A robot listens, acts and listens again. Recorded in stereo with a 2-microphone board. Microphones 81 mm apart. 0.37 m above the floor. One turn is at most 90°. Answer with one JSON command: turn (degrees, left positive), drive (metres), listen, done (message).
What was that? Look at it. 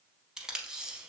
{"turn": -30}
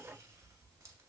{"listen": true}
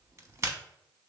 {"turn": -90}
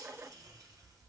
{"turn": -55}
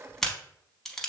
{"done": "Facing the tape being pulled, under 1 m away."}